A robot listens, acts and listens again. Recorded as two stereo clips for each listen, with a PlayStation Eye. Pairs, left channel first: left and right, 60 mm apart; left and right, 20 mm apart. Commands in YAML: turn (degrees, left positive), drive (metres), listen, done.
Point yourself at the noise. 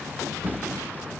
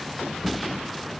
turn: -30
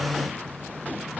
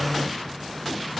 listen: true
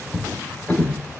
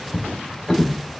turn: 25
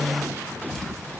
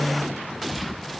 listen: true
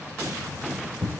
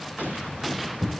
turn: 10
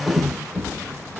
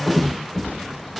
done: "Found it: a drawer, straight ahead."